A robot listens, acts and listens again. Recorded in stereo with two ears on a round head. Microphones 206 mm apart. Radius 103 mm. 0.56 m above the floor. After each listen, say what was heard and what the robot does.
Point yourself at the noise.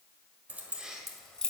Turn 30° left.
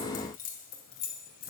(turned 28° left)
So it is at 135° left. Turn 135° left.
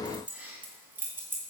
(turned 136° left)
The keys jangling is now 10° right. Turn 10° right.
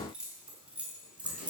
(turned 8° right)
Found it: keys jangling, straight ahead.